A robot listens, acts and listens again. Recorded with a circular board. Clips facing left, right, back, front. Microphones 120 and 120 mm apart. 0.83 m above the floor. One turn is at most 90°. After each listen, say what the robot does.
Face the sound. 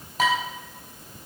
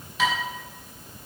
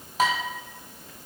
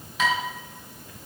Turn 90° left.
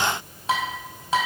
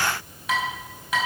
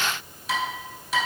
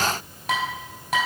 Turn 30° left.
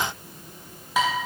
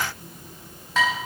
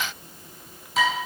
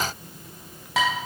Turn 10° left.
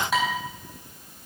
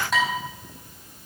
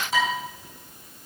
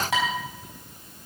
Found it: dishes clattering, straight ahead.